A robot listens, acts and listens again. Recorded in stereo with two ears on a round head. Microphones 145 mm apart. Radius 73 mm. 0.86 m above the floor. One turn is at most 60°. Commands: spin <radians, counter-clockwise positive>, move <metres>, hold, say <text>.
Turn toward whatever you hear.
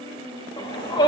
spin 0.44
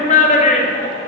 spin 1.05
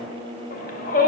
spin 1.05
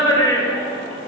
spin 0.44
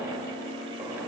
hold
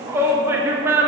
spin -0.26
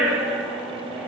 say Facing the shout.